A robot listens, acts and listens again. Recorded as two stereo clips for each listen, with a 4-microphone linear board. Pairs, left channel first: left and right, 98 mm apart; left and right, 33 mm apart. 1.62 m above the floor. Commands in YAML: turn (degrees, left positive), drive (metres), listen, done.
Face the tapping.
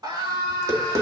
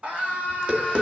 turn: -30
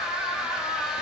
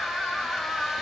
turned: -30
listen: true
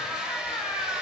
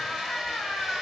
listen: true
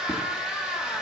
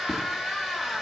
done: "I heard tapping, but can't make it out now. It was about straight ahead or 120° right."